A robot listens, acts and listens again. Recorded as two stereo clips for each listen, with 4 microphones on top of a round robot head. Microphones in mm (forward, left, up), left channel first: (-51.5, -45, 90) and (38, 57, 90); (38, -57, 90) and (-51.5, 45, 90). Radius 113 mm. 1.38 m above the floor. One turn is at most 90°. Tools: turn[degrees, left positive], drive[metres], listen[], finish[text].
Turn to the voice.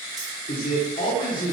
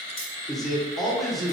Thought: The man speaking: 140° right.
Action: turn[-90]
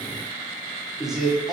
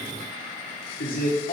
Thought: The man speaking is now 40° right.
Action: turn[-40]
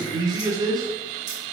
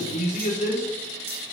Thought: The man speaking is now 15° right.
Action: turn[-15]
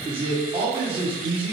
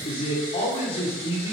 Action: finish[Facing the man speaking.]